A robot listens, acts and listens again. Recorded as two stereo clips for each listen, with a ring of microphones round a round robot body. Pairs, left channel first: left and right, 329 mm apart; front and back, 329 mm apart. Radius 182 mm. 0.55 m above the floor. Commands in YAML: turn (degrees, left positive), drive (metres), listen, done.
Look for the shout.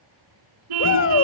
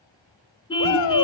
turn: 40
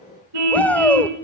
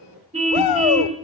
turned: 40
done: "Facing the shout, 1 to 2 m away."